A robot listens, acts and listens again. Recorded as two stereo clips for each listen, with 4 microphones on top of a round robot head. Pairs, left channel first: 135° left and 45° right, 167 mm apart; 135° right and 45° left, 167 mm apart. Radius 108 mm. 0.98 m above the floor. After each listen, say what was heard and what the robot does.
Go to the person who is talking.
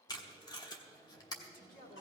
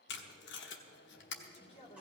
The woman speaking: 170° left. Turn 170° left.
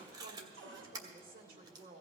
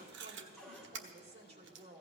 The woman speaking is now 10° right. Turn 10° right.
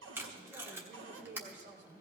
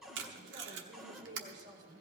Drive 1.0 m forward.
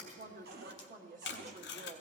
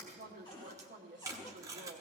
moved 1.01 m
Drive 1.0 m forward.
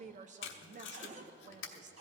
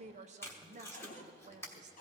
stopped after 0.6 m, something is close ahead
I am next to the woman speaking.